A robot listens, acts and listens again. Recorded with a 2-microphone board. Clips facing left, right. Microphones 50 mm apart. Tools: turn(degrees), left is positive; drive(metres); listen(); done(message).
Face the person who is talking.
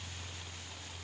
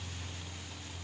listen()
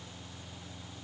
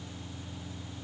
listen()
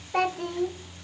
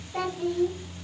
turn(degrees=70)
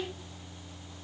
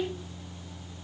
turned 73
turn(degrees=10)
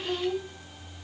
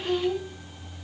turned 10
done("Found it: a child speaking, straight ahead.")